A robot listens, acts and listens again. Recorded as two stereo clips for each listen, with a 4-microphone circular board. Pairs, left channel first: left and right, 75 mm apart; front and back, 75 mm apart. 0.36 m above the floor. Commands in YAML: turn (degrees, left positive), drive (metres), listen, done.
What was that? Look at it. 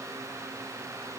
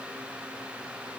listen: true
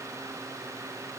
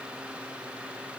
listen: true
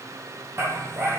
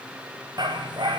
turn: -150
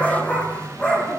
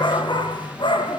turn: 10
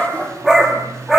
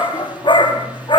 done: "Found it: a dog barking, straight ahead."